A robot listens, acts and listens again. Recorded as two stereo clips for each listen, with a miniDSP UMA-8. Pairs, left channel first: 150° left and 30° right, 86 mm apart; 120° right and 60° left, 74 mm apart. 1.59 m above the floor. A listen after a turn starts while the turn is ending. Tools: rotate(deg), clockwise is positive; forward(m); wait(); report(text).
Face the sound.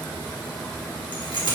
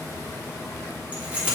rotate(-135)
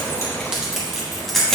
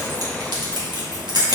rotate(-65)
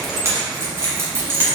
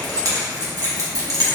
rotate(-30)
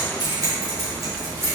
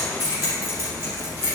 rotate(-20)
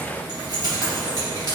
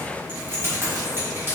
rotate(-10)
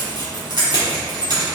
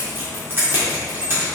report("Facing the keys jangling, 2 to 4 m away.")